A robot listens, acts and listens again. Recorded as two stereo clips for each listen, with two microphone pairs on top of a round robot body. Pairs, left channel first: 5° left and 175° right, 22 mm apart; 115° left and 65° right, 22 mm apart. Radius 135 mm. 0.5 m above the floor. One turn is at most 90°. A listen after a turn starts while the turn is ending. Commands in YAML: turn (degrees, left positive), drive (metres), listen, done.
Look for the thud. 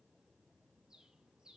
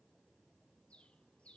listen: true
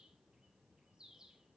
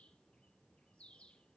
listen: true
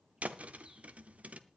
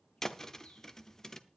turn: -90
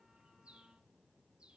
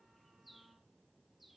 turn: -85
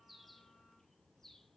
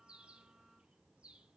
done: "Facing where the thud came from. I can't hear it now."